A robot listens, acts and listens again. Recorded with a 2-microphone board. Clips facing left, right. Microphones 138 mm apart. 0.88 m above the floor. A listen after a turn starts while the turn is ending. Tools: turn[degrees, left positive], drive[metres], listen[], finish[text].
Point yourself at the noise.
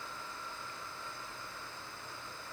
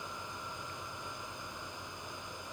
Action: listen[]
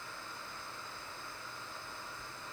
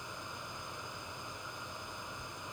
Action: listen[]
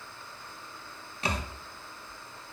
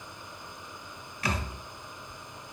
Thought: The thud: about 25° left or 155° left.
Action: turn[25]
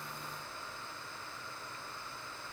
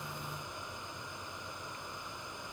Action: listen[]
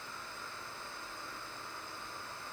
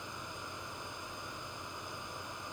Action: finish[I heard a thud, but can't make it out now. It was about straight ahead or 130° left.]